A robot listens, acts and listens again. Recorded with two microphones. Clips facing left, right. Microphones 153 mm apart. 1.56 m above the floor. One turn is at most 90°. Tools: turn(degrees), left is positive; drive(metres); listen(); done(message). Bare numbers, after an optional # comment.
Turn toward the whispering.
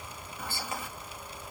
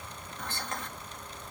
turn(30)
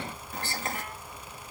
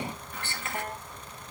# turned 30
# So it is at 145° left.
turn(90)
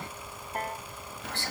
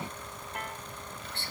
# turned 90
# The whispering is now 65° left.
turn(65)
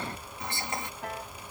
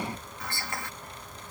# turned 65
# The whispering is now 20° left.
turn(20)
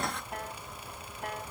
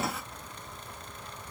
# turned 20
listen()
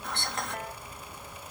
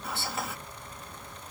done("Found it: whispering, straight ahead.")